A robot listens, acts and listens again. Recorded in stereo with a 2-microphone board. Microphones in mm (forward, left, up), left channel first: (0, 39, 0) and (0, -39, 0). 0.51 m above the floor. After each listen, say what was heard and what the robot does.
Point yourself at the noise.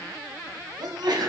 The sneeze: about 70° right or 110° right. Turn 70° right.
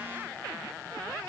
Keep listening.
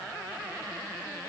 I heard a sneeze, but can't make it out now. It was about straight ahead or 40° right.